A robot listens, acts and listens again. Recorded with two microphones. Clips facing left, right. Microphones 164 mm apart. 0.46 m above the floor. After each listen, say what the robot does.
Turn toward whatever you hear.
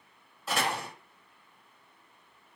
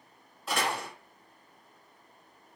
Turn 30° left.
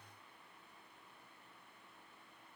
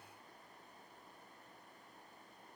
Keep listening.
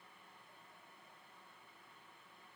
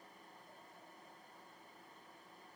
I heard a door slam, but can't make it out now. It was about 30° right or 150° left.